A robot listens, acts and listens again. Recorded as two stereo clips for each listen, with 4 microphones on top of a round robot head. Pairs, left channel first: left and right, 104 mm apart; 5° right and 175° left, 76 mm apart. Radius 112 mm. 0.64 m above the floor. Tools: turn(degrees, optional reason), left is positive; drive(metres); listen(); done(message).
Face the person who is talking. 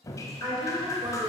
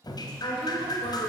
turn(degrees=-30, reason="The woman speaking: 30° right.")
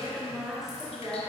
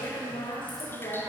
done("Found it: a woman speaking, straight ahead, 2 to 4 m away.")